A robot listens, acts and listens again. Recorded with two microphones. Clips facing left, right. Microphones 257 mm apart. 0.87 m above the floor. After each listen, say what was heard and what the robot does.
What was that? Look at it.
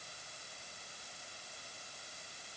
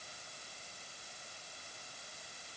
Keep listening.
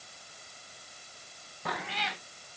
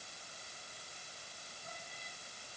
Turn 90° left.
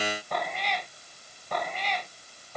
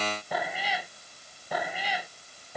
So it is at 10° right. Turn 10° right.
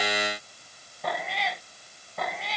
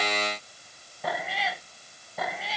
Facing the cat meowing.